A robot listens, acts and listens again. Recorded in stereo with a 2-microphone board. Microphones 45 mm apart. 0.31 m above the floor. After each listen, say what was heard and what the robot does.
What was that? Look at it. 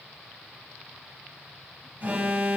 The alarm: about 40° right or 140° right. Turn 40° right.
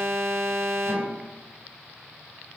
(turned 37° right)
So it is at 95° right. Turn 95° right.
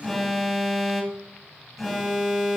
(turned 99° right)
Found it: an alarm, straight ahead.